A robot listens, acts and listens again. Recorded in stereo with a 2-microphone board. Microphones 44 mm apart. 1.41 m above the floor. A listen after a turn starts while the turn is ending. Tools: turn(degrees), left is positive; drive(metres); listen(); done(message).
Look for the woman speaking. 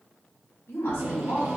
turn(degrees=90)
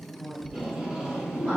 turn(degrees=-25)
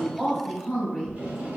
done("Found it: a woman speaking, straight ahead, 2 to 4 m away.")